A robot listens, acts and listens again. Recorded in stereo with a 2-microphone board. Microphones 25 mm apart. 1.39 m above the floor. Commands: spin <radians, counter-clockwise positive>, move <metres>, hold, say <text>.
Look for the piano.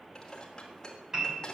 spin -0.44
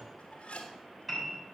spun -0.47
say Found it: a piano, straight ahead, over 4 m away.